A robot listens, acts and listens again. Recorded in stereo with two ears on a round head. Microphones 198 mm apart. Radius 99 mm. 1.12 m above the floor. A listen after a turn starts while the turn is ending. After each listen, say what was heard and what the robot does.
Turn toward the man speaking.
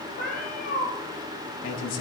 The man speaking: about 65° left or 115° left. Turn 65° left.
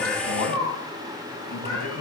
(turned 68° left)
So it is at 50° left. Turn 50° left.
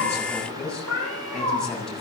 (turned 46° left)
Found it: a man speaking, straight ahead.